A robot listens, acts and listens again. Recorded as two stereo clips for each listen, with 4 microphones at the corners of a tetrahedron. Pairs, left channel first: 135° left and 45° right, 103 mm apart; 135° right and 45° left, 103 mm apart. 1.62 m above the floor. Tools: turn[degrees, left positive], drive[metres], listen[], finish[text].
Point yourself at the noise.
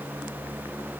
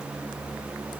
Action: listen[]
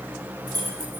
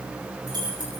Action: finish[Facing the keys jangling.]